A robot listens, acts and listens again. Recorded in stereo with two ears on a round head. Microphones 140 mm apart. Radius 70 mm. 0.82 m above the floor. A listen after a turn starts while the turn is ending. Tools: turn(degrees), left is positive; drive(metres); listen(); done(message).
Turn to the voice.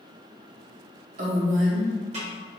turn(degrees=-50)
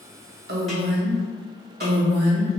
turn(degrees=-75)
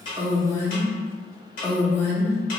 turn(degrees=15)
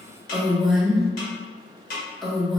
done("Facing the woman speaking, under 1 m away.")